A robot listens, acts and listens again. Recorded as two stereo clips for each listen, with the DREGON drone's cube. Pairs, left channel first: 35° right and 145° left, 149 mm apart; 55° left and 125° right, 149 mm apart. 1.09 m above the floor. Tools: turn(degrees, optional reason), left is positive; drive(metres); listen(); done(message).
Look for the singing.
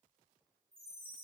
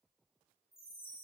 listen()
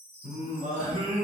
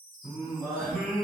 turn(degrees=145, reason="The singing: 145° left.")
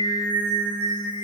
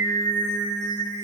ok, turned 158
turn(degrees=15, reason="The singing is now 15° left.")
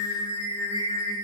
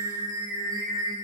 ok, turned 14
turn(degrees=15, reason="The singing is now 15° left.")
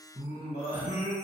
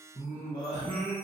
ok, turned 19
done("Found it: singing, straight ahead.")